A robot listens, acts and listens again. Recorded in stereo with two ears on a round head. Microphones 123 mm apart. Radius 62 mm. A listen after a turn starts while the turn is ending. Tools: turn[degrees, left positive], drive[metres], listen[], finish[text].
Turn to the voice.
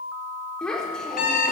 Action: turn[30]
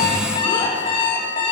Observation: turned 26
Action: listen[]
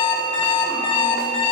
Action: listen[]
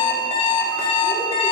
Action: finish[I heard a child speaking, but can't make it out now. It was about 20° right or 150° left.]